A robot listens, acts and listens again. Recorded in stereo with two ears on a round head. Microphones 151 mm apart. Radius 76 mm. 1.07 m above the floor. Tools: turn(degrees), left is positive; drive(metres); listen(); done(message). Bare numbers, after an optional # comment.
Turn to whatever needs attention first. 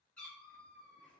listen()
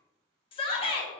# The shout: about 30° left or 150° left.
turn(30)
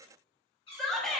done("Facing the shout, under 1 m away.")